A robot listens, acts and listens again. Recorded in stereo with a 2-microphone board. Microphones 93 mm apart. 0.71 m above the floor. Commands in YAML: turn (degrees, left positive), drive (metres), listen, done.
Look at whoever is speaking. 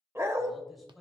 turn: 30
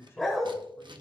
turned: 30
turn: 150
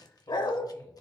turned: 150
listen: true
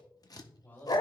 turn: 20
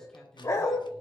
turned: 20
done: "Facing the man speaking, 2 to 4 m away."